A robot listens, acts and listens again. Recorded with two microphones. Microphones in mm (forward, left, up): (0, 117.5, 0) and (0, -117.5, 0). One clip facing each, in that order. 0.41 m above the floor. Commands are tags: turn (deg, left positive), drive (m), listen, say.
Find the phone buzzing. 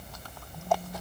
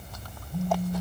<turn deg="-30"/>
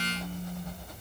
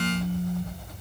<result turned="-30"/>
<say>Found it: a phone buzzing, straight ahead, 2 to 4 m away.</say>